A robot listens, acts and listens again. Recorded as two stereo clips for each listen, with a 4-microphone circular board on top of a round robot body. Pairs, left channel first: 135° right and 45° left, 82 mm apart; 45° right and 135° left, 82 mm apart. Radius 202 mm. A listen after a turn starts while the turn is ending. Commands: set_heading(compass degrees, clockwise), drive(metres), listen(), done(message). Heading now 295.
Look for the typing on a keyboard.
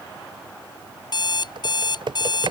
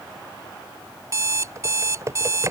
set_heading(220)
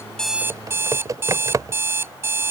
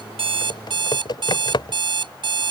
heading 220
done("Found it: typing on a keyboard, straight ahead.")